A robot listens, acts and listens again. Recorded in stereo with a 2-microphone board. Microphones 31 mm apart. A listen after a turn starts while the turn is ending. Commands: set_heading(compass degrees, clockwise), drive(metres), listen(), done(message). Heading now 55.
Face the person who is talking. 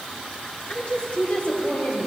set_heading(5)
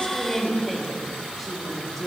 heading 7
set_heading(357)
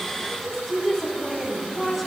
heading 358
done("Found it: a woman speaking, straight ahead, over 4 m away.")